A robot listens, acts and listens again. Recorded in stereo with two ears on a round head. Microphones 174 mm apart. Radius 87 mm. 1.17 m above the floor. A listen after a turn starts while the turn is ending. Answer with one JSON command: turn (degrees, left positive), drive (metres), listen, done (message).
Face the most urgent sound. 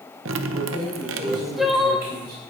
{"turn": 30}
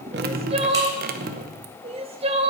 {"turn": -35}
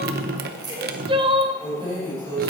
{"turn": -30}
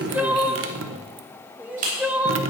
{"turn": -10}
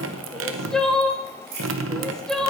{"done": "Found it: crying, straight ahead."}